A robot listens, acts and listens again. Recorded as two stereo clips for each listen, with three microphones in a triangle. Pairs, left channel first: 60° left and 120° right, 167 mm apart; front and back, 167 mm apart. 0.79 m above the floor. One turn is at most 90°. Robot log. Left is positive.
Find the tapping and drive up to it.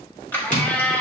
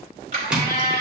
note: The tapping: 95° left.
cmd yaw +90
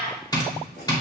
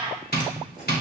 cmd fwd 1.0
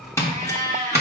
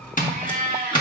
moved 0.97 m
note: The tapping is now 10° right.
cmd yaw -10
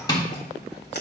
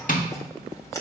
cmd fwd 1.0
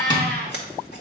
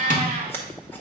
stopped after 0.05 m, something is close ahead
cmd idle
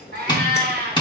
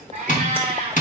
end: I am next to the tapping.